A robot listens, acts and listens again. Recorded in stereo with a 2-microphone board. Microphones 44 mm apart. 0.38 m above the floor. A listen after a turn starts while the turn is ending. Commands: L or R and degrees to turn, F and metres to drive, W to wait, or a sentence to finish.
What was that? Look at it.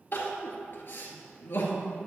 L45
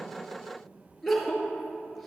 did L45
Facing the crying.